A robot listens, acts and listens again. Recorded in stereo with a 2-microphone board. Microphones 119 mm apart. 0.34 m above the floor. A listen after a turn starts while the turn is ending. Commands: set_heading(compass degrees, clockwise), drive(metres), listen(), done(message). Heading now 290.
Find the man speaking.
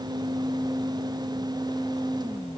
listen()
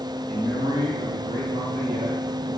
set_heading(355)
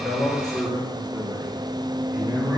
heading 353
set_heading(18)
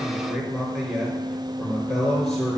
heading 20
done("Found it: a man speaking, straight ahead.")